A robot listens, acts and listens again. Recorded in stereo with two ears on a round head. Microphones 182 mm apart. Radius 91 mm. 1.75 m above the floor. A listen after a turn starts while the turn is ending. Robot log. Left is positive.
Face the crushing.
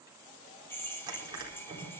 note: The crushing: about 20° right or 160° right.
cmd yaw -20
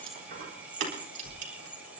note: So it is at 140° right.
cmd yaw -140
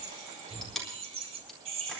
end: Found it: crushing, straight ahead.